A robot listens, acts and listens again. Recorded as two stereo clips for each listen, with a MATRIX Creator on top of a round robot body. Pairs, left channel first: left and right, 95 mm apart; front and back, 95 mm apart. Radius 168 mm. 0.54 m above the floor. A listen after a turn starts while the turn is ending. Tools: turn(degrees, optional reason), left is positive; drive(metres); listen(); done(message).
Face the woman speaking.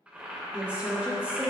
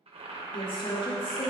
turn(degrees=-15, reason="The woman speaking: 15° right.")
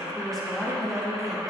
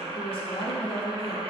done("Found it: a woman speaking, straight ahead.")